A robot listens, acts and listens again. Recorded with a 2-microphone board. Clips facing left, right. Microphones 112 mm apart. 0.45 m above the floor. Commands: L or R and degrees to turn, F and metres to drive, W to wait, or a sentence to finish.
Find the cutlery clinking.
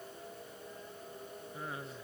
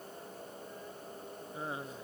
W
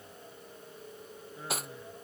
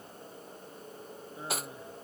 L30
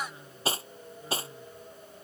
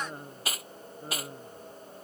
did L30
L150
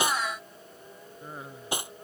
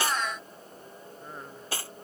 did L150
L20
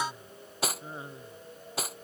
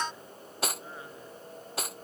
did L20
Facing the cutlery clinking.